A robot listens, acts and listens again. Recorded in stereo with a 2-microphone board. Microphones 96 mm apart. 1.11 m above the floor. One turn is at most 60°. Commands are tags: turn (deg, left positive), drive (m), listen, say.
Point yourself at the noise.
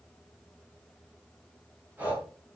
<turn deg="-20"/>
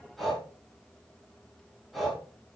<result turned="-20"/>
<say>Found it: breathing, straight ahead, over 4 m away.</say>